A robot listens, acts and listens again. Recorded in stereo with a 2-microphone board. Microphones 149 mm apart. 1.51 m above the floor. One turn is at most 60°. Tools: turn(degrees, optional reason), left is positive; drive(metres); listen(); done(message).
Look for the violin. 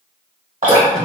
listen()
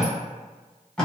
listen()
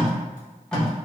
done("I can't make out a violin to turn to.")